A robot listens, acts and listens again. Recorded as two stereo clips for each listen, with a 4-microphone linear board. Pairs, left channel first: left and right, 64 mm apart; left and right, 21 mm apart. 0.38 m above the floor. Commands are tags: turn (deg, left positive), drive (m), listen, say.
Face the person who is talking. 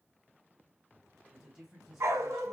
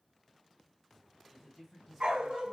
<turn deg="-30"/>
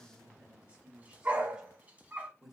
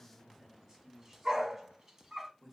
<turn deg="-30"/>
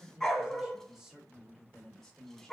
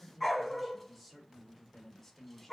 <turn deg="30"/>
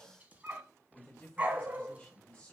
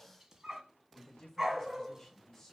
<turn deg="20"/>
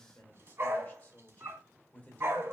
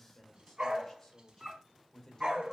<turn deg="25"/>
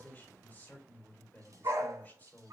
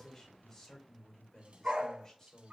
<turn deg="30"/>
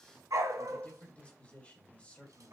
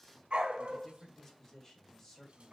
<turn deg="20"/>
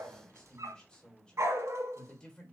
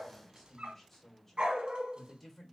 <turn deg="15"/>
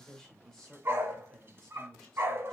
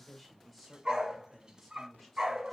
<turn deg="30"/>
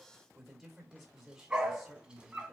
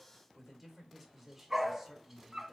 <say>Found it: a man speaking, straight ahead, 1 to 2 m away.</say>